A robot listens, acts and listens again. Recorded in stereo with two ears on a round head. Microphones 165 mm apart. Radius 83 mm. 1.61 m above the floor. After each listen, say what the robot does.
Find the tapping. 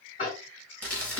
Turn 40° left.
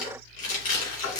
Turn 95° left.
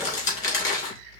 Keep listening.
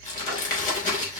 Keep listening.
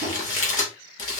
Turn 15° right.
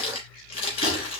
Keep listening.
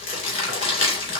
Keep listening.
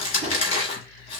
Facing where the tapping came from. I can't hear it now.